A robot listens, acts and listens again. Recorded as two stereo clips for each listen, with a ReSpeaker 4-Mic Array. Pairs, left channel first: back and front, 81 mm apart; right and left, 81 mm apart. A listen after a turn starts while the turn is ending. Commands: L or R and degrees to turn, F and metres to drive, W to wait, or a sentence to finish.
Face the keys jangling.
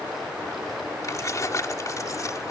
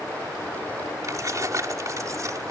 L135
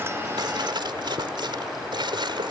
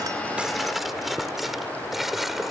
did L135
Facing the keys jangling.